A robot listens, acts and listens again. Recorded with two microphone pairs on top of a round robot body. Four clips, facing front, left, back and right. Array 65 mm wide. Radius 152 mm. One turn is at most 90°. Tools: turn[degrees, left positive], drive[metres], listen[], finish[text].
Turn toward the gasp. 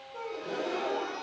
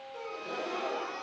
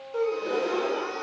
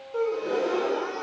Thought: The gasp: 140° right.
Action: turn[-90]
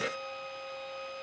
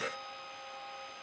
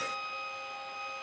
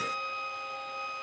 Thought: Nothing new. It was at 50° right.
Action: turn[-50]
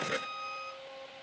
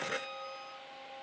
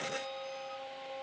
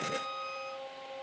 Action: finish[Facing where the gasp came from. I can't hear it now.]